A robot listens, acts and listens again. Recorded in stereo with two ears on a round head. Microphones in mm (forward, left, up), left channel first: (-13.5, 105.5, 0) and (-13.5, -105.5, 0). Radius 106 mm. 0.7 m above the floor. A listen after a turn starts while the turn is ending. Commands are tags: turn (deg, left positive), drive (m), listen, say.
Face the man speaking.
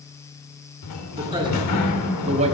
<turn deg="-30"/>
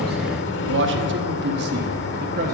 <turn deg="-30"/>
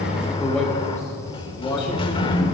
<turn deg="20"/>
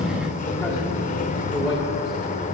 <turn deg="15"/>
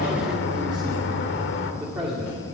<say>Found it: a man speaking, straight ahead.</say>